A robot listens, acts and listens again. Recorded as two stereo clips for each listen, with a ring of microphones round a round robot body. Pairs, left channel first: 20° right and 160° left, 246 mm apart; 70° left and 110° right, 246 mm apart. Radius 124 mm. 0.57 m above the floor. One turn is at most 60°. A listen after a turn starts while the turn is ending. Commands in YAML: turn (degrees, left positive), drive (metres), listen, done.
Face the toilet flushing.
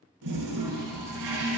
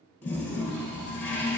turn: 60
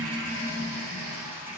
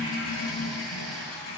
turn: 60
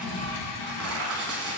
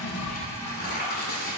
turn: -10
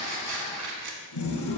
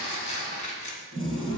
done: "Found it: a toilet flushing, straight ahead."